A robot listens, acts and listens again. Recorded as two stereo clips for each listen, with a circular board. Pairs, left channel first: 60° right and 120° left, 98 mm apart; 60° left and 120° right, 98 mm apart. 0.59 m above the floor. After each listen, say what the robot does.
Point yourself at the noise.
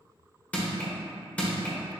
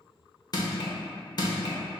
Turn 15° left.
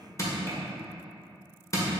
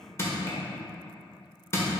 Facing the crushing.